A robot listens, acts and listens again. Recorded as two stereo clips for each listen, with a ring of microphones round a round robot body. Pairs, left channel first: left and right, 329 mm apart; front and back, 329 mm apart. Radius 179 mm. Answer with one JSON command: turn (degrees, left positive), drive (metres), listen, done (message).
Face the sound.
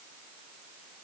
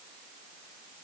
{"listen": true}
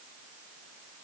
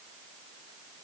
{"listen": true}
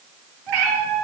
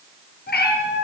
{"turn": -60}
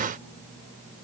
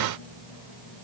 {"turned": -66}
{"listen": true}
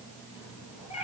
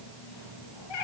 {"turn": 15}
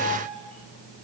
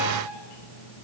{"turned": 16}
{"listen": true}
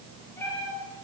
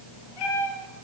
{"done": "Facing the cat meowing, over 4 m away."}